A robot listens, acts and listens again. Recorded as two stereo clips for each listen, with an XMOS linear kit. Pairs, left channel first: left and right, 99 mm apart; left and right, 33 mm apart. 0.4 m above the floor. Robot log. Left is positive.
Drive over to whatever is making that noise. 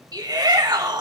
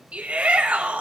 note: The shout: about 45° right or 135° right.
cmd yaw -45
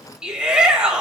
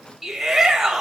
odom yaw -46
note: So it is at 10° right.
cmd yaw -10
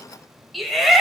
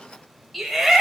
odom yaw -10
cmd fwd 1.0
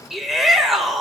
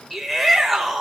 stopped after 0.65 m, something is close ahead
end: Arrived at the shout, straight ahead.